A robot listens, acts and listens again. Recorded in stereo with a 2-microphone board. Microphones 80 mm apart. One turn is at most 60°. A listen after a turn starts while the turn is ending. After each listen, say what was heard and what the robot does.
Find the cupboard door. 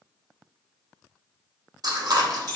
Keep listening.
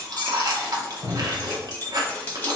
The cupboard door: about 55° left or 125° left. Turn 55° left.
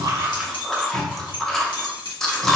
Keep listening.
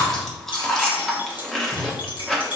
Keep listening.
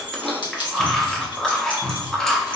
So it is at 45° left. Turn 45° left.
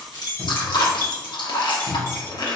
Keep listening.
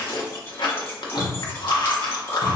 The cupboard door is now 20° right. Turn 20° right.
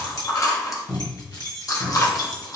The cupboard door is now 10° left. Turn 10° left.
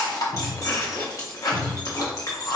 Facing the cupboard door.